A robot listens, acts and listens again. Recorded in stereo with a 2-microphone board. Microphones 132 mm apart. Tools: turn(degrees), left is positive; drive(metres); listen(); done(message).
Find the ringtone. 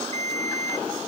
turn(degrees=-55)
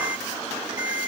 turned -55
turn(degrees=-35)
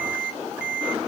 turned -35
turn(degrees=-10)
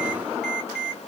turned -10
done("Facing the ringtone.")